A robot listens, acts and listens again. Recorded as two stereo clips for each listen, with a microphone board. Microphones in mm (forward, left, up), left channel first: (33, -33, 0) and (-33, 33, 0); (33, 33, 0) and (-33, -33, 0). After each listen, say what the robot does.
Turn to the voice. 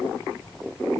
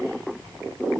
Keep listening.
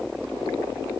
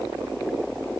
Keep listening.
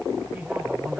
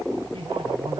Turn 155° right.
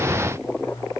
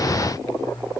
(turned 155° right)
Facing the man speaking.